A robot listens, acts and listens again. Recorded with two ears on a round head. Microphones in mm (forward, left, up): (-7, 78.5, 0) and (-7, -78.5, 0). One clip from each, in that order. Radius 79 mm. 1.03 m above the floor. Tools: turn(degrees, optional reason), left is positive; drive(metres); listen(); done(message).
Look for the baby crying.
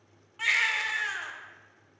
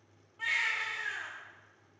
turn(degrees=60, reason="The baby crying: about 60° left or 120° left.")
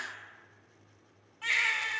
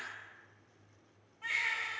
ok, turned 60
turn(degrees=60, reason="So it is at 60° left.")
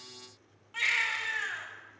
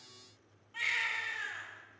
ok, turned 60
turn(degrees=25, reason="The baby crying is now 25° left.")
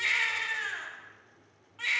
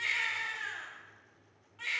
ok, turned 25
turn(degrees=15, reason="The baby crying is now 15° left.")
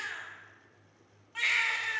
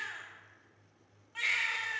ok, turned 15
done("Found it: a baby crying, straight ahead.")